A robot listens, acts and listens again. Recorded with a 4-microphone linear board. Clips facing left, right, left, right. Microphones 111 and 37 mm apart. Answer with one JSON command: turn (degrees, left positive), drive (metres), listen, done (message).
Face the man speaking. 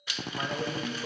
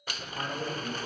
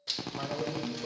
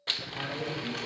{"turn": 30}
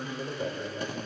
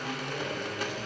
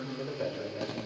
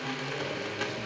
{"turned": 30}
{"turn": 140}
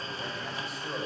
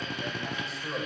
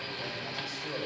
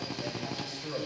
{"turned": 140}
{"done": "Facing the man speaking."}